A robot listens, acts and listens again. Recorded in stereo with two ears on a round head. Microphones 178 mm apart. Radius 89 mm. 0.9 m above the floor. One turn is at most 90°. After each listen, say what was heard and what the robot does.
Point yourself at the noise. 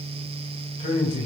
The man speaking: about 35° left or 145° left. Turn 35° left.
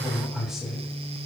Facing the man speaking, 2 to 4 m away.